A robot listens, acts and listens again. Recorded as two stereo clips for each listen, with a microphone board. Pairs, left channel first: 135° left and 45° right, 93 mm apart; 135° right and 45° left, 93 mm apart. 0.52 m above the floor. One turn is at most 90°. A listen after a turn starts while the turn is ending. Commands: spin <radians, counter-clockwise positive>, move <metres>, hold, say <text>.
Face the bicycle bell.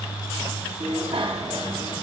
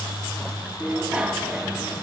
spin -0.52
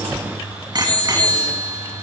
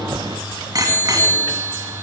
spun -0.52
say Facing the bicycle bell.